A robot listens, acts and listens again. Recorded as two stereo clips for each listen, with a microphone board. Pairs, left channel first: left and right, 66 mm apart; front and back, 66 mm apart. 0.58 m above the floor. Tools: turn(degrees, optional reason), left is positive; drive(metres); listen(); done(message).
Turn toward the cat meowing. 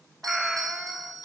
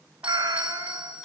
turn(degrees=-175, reason="The cat meowing: 175° right.")
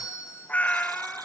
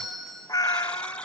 turn(degrees=20, reason="The cat meowing is now 20° left.")
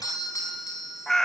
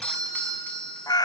done("Facing the cat meowing.")